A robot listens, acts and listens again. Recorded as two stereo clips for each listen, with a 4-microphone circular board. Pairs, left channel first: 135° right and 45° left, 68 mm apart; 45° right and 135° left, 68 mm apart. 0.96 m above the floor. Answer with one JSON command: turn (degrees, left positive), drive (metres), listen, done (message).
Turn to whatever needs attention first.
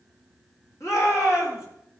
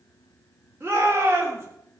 {"turn": -170}
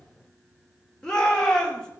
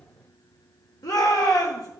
{"turn": -60}
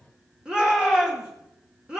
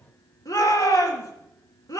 {"turn": -30}
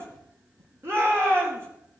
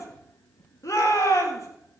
{"done": "Facing the shout."}